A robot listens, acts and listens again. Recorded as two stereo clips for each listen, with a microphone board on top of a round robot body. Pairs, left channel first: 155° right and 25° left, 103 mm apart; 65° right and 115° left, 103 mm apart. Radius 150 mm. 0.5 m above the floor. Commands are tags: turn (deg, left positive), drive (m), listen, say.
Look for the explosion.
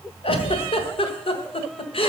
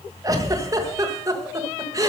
<turn deg="-150"/>
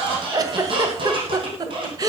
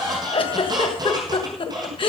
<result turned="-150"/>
<say>Facing where the explosion came from. I can't hear it now.</say>